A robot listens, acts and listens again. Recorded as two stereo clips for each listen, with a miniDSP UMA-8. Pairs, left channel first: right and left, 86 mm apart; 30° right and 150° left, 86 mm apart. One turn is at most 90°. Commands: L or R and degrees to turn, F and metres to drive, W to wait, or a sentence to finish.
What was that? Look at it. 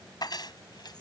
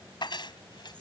R60
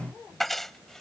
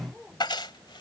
Facing the keys jangling.